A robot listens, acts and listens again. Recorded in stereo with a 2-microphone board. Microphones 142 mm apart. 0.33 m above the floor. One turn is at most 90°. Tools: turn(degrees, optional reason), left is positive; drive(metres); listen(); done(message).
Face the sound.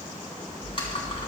turn(degrees=40, reason="The typing on a keyboard: about 40° left or 140° left.")
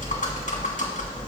turn(degrees=90, reason="So it is at 95° left.")
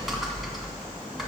done("Found it: typing on a keyboard, straight ahead.")